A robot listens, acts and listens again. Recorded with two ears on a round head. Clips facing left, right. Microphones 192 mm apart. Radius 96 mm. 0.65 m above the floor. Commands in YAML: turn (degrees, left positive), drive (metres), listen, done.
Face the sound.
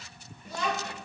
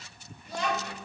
turn: 90
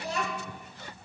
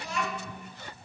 turn: 35
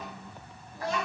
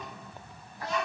turn: 45
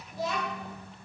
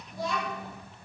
turn: 10
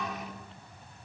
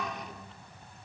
done: "Facing the child speaking, 2 to 4 m away."